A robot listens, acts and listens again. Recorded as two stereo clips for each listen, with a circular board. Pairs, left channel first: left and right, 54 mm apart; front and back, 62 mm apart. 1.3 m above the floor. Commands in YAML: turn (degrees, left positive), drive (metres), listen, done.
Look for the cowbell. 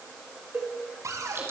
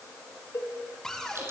turn: -40
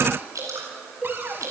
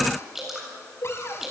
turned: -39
done: "Found it: a cowbell, straight ahead."